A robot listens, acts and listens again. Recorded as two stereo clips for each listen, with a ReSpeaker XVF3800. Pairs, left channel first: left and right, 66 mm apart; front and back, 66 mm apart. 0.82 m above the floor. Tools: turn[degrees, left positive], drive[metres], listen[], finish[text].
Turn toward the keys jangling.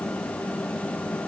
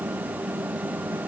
Action: listen[]
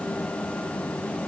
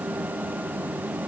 Action: listen[]
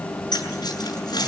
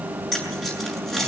Thought: The keys jangling: 85° left.
Action: turn[85]
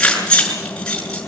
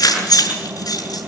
Thought: The keys jangling is now 10° left.
Action: turn[10]
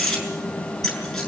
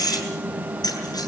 Action: finish[Found it: keys jangling, straight ahead, over 4 m away.]